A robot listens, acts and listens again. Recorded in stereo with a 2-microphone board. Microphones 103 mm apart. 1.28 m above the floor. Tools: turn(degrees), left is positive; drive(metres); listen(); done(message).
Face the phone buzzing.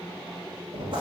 listen()
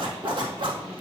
listen()
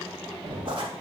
done("I can't make out a phone buzzing to turn to.")